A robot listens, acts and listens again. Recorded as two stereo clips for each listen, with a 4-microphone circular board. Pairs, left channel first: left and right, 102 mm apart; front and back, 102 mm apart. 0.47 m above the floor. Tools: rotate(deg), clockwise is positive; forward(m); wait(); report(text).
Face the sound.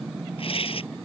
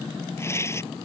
rotate(-65)
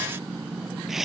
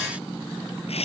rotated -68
report("Found it: tearing paper, straight ahead.")